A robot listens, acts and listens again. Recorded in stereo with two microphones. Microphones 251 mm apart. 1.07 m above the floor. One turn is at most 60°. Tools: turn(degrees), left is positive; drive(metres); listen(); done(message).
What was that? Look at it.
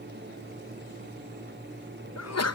turn(degrees=60)
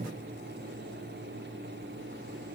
turn(degrees=30)
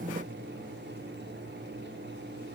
done("I heard a sneeze from this way, but can't make it out now.")